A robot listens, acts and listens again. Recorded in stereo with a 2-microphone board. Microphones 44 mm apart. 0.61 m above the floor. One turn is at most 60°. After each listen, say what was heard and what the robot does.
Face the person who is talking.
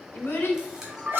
The child speaking: about 50° left or 130° left. Turn 50° left.
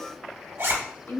So it is at 75° left. Turn 60° left.
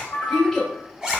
The child speaking is now 15° left. Turn 15° left.
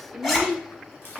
Facing the child speaking, 1 to 2 m away.